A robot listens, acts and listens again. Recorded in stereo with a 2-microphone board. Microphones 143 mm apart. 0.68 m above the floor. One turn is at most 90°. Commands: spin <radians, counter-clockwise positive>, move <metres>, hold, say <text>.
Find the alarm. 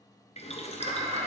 spin -0.87
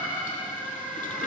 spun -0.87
say Found it: an alarm, straight ahead, 2 to 4 m away.